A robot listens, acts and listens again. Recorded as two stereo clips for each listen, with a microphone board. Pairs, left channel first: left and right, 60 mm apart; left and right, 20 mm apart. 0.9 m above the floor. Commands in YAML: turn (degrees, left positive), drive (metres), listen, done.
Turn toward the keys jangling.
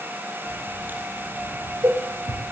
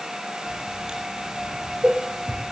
turn: 70
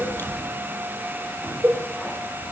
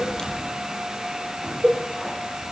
turn: 15
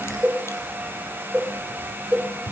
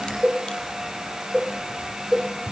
turn: 10
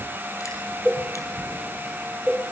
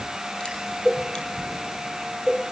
done: "Facing the keys jangling, over 4 m away."